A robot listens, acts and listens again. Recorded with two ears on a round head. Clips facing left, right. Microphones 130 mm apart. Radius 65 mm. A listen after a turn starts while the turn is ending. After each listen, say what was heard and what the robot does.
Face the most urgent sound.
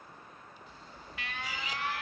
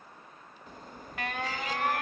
The alarm: about 40° right or 140° right. Turn 40° right.
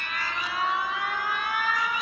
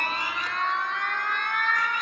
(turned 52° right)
Found it: an alarm, straight ahead.